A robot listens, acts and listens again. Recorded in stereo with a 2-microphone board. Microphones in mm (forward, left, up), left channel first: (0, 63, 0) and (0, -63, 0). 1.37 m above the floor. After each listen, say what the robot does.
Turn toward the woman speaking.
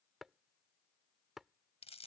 Keep listening.
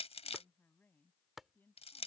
Turn 15° left.
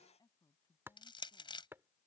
Turn 145° left.
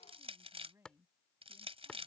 Turn 20° right.
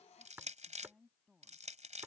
Facing the woman speaking.